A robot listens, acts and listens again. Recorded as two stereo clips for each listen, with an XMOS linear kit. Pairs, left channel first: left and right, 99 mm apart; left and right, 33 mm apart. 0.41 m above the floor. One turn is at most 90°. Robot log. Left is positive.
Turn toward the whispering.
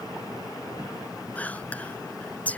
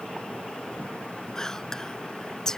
note: The whispering: about 15° left or 165° left.
cmd yaw +15
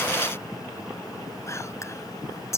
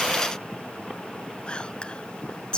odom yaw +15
note: So it is at 150° left.
cmd yaw +90
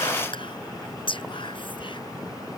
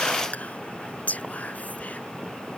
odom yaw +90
note: The whispering is now 60° left.
cmd yaw +60
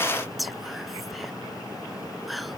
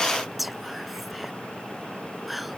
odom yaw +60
end: Facing the whispering.